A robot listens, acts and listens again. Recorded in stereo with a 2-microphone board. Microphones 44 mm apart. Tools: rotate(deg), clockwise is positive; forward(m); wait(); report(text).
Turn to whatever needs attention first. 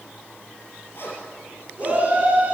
rotate(30)
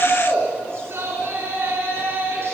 rotate(115)
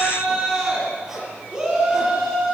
rotate(15)
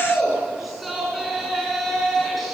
report("Found it: a shout, straight ahead, over 4 m away.")